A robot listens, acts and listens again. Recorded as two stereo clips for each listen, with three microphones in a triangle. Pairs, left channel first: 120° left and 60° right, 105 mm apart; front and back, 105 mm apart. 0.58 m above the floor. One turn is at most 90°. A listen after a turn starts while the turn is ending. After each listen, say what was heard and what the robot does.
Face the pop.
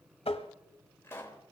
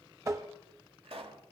The pop: 175° right. Turn 90° right.
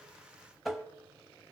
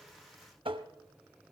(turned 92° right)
Nothing new. It was at 80° right. Turn 80° right.
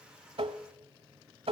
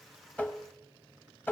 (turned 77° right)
I heard a pop from this way, but can't make it out now.